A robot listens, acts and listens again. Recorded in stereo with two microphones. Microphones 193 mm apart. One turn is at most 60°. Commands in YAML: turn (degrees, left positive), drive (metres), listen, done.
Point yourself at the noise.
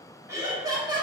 turn: -25
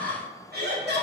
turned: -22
turn: -60
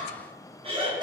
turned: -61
turn: -20
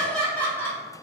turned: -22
turn: 10
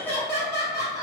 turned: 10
turn: 20
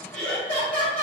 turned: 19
done: "Found it: laughter, straight ahead."